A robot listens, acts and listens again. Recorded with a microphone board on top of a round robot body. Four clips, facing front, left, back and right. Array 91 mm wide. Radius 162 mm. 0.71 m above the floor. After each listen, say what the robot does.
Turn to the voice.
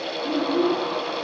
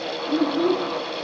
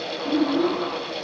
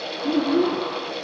Turn 80° right.
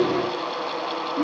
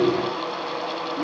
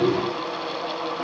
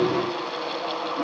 Turn 10° left.
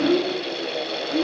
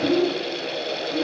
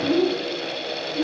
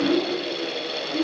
Facing the child speaking.